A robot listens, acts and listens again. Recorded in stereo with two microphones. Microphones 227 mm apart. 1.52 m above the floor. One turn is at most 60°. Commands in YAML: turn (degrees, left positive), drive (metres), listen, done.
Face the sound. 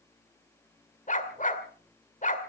turn: 35
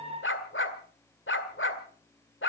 turn: 60
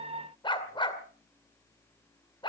turn: 25
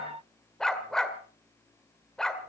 done: "Facing the dog barking."